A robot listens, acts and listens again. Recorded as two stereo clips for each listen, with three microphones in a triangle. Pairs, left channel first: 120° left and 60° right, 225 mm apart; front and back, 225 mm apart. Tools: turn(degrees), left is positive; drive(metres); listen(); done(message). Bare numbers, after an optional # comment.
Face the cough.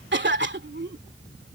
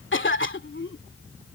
# The cough: 25° right.
turn(-25)
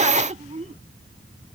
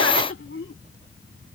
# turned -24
done("Found it: a cough, straight ahead.")